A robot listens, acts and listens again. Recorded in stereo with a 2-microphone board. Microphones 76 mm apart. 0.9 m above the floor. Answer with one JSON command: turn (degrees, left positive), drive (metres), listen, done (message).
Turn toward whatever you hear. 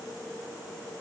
{"listen": true}
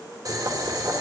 {"turn": -55}
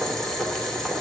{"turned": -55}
{"done": "Facing the boiling."}